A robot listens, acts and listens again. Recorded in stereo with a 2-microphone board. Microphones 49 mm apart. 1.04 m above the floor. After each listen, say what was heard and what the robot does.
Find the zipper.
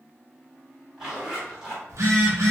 Turn 30° right.
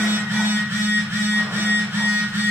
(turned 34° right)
Keep listening.
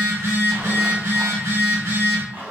So it is at 130° right. Turn 130° right.
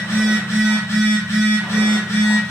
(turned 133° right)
Keep listening.
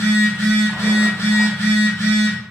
Keep listening.
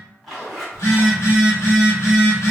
Found it: a zipper, straight ahead, 1 to 2 m away.